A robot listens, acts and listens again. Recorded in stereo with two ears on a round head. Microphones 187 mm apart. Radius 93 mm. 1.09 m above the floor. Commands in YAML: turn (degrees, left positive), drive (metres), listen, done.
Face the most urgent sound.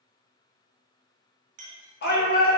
turn: 50
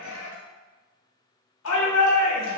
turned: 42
turn: 85
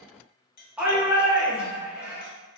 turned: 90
done: "Found it: a shout, straight ahead, 1 to 2 m away."